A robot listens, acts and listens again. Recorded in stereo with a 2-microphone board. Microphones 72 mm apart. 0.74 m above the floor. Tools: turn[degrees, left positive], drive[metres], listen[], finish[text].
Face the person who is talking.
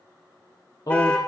Thought: The man speaking: about 60° left or 120° left.
Action: turn[60]
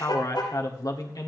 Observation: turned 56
Thought: So it is at 60° left.
Action: turn[60]
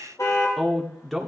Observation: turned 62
Action: finish[Facing the man speaking, 1 to 2 m away.]